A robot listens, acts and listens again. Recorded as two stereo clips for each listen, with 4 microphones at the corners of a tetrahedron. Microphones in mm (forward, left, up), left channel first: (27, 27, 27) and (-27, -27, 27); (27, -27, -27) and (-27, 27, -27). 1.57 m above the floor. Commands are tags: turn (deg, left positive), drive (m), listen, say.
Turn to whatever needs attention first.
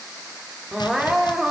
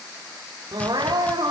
<turn deg="140"/>
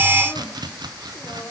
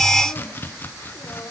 <listen/>
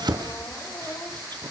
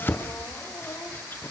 <listen/>
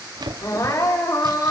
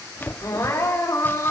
<say>Facing the crying.</say>